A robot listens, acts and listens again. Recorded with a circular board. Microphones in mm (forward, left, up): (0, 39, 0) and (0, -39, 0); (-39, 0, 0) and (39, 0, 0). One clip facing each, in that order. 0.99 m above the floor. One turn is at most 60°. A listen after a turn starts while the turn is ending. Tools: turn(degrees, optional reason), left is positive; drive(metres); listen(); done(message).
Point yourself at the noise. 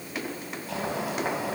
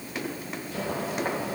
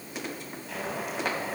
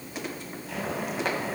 turn(degrees=60, reason="The boiling: 90° left.")
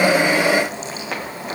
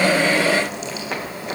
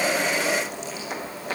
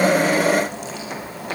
turn(degrees=35, reason="The boiling is now 35° left.")
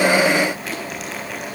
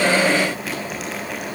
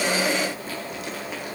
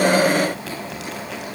done("Facing the boiling, over 4 m away.")